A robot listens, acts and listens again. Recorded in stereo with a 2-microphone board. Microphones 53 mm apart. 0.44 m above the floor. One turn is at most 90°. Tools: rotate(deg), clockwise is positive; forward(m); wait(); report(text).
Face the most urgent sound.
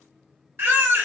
rotate(45)
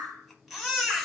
report("Facing the baby crying.")